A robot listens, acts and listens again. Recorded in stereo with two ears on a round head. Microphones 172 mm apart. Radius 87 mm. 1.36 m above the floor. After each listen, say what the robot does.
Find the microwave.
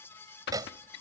Turn 20° right.
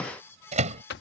Turn 140° right.
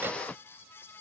Keep listening.
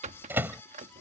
Turn 10° right.
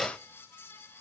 Found it: a microwave, straight ahead.